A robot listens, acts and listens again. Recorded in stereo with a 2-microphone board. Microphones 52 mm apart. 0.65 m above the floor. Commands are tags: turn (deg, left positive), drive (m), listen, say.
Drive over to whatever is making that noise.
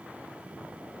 <listen/>
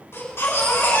<turn deg="55"/>
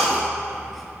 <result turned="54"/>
<drive m="1.0"/>
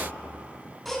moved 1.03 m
<drive m="1.0"/>
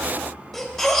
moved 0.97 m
<turn deg="10"/>
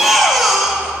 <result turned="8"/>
<drive m="1.0"/>
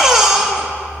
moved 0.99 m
<drive m="1.0"/>
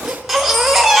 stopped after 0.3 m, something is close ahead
<say>Arrived at the baby crying, straight ahead.</say>